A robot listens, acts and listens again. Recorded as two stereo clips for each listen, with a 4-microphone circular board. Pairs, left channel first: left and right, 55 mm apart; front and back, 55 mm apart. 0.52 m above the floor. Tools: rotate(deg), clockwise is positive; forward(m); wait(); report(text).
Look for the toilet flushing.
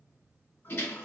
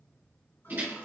rotate(-45)
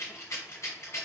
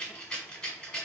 wait()
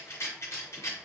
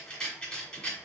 wait()
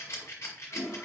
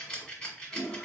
rotate(20)
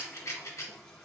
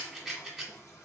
report("Facing the toilet flushing.")